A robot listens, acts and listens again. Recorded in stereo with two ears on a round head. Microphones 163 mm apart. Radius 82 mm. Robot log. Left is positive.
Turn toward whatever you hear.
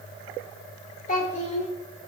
note: The child speaking: about 35° left or 145° left.
cmd yaw +35
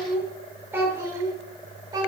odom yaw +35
note: So it is at 20° right.
cmd yaw -20
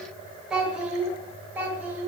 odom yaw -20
note: The child speaking is now 10° right.
cmd yaw -10
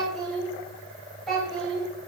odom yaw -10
end: Facing the child speaking, 2 to 4 m away.